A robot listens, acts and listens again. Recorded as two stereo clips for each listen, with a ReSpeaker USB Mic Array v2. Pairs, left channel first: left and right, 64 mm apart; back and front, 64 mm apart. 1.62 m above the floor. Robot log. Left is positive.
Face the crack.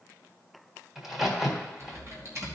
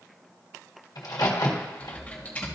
note: The crack: 175° right.
cmd yaw -175
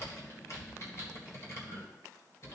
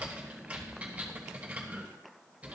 end: I heard a crack from this way, but can't make it out now.